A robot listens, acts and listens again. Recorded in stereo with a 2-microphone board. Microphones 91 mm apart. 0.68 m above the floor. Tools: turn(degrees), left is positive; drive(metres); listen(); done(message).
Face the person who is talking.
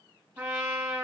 listen()
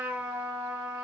listen()
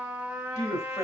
turn(degrees=35)
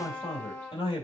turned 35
turn(degrees=115)
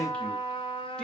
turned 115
listen()
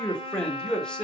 turn(degrees=10)
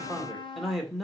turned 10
done("Found it: a man speaking, straight ahead.")